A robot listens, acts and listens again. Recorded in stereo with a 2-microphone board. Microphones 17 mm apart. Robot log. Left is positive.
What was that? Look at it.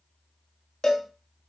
note: The cowbell: about 35° left or 145° left.
cmd yaw +35
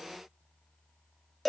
end: Facing the cowbell.